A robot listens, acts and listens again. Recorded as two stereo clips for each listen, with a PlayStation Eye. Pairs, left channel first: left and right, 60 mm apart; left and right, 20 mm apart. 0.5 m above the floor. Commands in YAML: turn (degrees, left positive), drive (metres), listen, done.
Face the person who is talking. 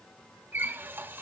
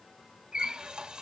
listen: true
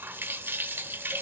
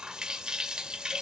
listen: true
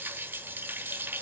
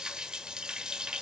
done: "I can't make out anyone speaking to turn to."